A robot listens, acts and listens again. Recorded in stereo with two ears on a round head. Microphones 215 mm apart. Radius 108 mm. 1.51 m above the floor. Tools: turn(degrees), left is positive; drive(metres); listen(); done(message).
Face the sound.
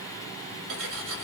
turn(degrees=-55)
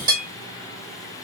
turn(degrees=-20)
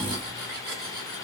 listen()
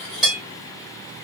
done("Found it: cutlery clinking, straight ahead, 1 to 2 m away.")